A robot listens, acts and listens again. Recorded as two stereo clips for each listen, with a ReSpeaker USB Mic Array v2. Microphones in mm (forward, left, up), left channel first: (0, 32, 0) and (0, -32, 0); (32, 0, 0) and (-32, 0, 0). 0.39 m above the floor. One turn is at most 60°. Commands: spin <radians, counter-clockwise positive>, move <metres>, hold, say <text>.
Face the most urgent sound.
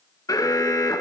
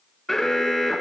spin 1.05
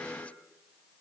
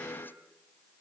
spin 0.44
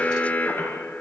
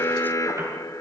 spin 0.44
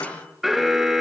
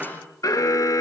say Found it: an alarm, straight ahead.